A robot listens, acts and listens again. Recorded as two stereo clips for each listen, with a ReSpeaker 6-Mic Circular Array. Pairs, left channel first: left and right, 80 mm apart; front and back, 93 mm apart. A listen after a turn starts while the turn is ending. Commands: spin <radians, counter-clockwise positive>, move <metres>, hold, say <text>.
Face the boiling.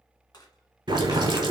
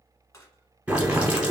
spin -1.83
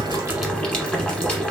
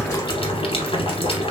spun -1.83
spin 0.17
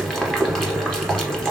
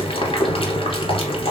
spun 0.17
say Facing the boiling, 1 to 2 m away.